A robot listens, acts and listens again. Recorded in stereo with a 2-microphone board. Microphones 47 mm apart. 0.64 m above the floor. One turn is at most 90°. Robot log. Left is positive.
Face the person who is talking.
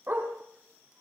cmd idle
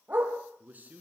note: The man speaking: about 35° right or 145° right.
cmd yaw -35
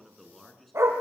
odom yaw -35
end: Found it: a man speaking, straight ahead, over 4 m away.